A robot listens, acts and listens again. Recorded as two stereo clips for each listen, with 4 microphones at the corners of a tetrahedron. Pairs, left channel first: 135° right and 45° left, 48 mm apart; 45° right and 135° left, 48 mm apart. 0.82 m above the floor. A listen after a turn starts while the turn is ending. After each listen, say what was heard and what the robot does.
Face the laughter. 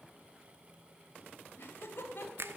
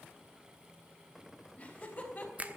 The laughter: 100° right. Turn 100° right.
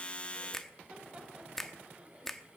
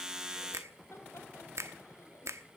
Keep listening.
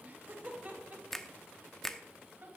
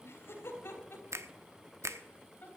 Found it: laughter, straight ahead.